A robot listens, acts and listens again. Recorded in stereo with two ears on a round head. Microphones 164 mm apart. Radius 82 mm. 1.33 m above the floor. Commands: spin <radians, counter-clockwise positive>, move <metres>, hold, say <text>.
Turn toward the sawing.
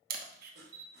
spin -1.05
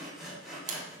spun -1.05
say Facing the sawing.